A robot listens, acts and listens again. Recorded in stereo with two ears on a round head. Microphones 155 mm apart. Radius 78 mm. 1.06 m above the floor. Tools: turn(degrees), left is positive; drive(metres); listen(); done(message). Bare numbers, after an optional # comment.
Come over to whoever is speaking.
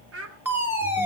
turn(-90)
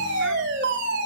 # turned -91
listen()
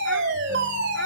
listen()
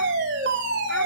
done("Facing where the child speaking came from. I can't hear it now. I did not reach it.")